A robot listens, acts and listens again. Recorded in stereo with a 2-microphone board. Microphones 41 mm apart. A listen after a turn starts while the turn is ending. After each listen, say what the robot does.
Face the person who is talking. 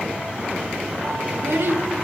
Turn 65° right.
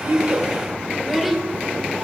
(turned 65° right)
Found it: a child speaking, straight ahead, 1 to 2 m away.